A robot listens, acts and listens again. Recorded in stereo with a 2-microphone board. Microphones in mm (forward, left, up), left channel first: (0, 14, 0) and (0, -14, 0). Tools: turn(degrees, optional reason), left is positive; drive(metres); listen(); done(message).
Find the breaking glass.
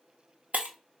turn(degrees=-70, reason="The breaking glass: about 70° right or 110° right.")
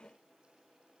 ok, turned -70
listen()
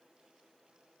done("I heard breaking glass, but can't make it out now. It was about straight ahead or 40° right.")